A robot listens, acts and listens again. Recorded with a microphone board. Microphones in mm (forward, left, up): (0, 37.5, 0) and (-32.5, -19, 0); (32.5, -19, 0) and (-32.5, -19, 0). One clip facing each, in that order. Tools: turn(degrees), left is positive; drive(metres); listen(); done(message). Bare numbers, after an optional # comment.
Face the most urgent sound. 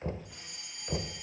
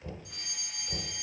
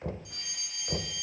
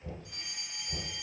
# The fire alarm: 120° right.
turn(-120)
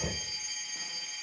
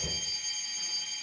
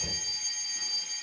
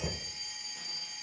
# The fire alarm is now 15° right.
turn(-15)
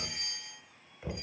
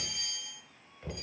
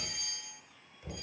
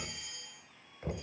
done("Found it: a fire alarm, straight ahead, over 4 m away.")